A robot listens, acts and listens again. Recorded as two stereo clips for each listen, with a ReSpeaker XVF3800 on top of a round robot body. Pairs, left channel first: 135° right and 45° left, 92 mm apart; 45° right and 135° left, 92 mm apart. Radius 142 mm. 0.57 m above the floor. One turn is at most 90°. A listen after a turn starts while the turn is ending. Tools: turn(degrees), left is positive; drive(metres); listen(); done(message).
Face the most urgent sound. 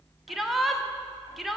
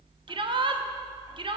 turn(degrees=90)
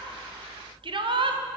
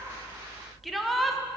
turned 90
turn(degrees=45)
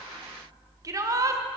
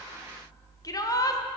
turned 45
done("Facing the shout.")